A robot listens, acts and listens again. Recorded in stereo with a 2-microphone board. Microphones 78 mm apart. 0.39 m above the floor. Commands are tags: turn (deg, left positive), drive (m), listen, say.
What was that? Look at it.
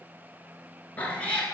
<turn deg="30"/>
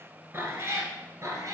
<turn deg="-45"/>
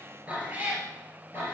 <turn deg="-30"/>
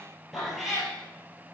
<say>Found it: a cat meowing, straight ahead.</say>